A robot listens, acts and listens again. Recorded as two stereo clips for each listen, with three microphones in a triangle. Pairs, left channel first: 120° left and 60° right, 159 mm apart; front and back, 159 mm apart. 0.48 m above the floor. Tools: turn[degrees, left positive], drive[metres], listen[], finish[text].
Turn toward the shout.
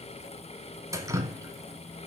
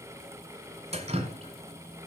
Action: listen[]
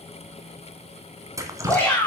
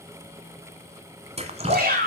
Thought: The shout: 160° right.
Action: turn[-160]
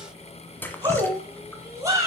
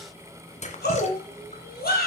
Thought: The shout is now 10° left.
Action: turn[10]
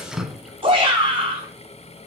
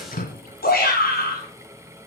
Action: finish[Found it: a shout, straight ahead, over 4 m away.]